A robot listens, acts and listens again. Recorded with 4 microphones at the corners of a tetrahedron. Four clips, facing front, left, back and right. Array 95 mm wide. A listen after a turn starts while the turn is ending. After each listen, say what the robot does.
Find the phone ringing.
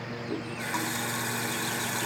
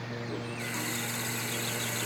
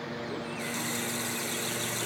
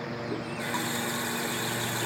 Keep listening.
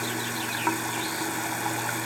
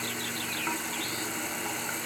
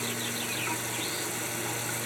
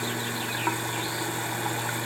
Keep listening.
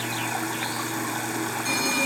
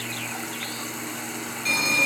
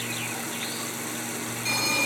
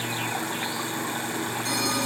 Turn 80° left.
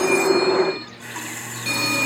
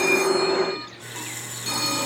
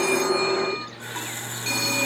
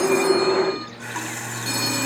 Found it: a phone ringing, straight ahead, over 4 m away.